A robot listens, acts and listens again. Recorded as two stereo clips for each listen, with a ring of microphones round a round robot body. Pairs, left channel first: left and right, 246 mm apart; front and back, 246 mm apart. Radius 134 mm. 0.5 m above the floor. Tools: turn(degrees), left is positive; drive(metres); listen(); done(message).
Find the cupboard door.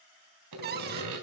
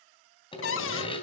turn(degrees=-35)
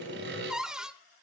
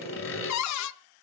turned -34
done("Found it: a cupboard door, straight ahead, under 1 m away.")